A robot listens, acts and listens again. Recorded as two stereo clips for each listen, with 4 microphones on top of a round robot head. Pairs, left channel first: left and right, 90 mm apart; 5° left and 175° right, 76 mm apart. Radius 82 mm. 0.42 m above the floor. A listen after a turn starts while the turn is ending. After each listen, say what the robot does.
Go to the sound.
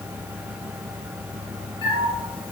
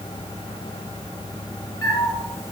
Turn 55° left.
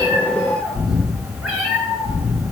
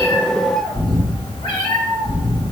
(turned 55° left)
Drive 1.0 m forward.
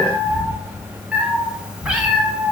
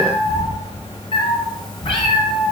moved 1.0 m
Turn 10° right.
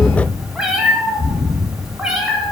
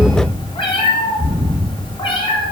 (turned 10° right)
Drive 1.0 m forward.
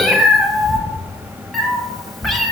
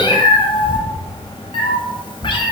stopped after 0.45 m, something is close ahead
Arrived at the cat meowing, straight ahead.